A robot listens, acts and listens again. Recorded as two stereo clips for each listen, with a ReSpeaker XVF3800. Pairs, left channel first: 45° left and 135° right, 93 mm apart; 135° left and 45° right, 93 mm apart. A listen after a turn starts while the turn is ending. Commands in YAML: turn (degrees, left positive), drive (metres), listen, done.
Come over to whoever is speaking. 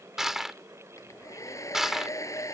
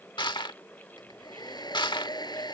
listen: true
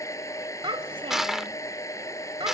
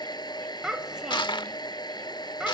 turn: -125
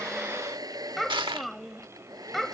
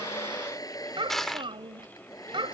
turn: -45
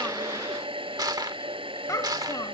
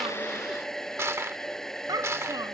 drive: 1.0
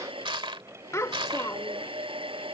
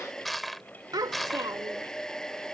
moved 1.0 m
drive: 1.0
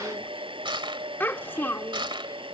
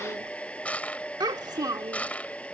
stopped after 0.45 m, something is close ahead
turn: -15
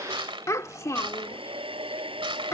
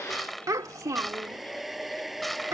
done: "Arrived at the child speaking, straight ahead."